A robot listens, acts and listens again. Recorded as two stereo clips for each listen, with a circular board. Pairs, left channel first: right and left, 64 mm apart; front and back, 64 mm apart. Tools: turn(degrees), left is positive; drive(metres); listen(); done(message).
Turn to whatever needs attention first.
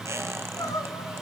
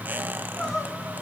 turn(degrees=-80)
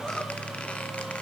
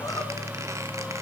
listen()
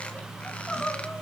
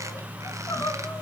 done("Found it: crying, straight ahead, 2 to 4 m away.")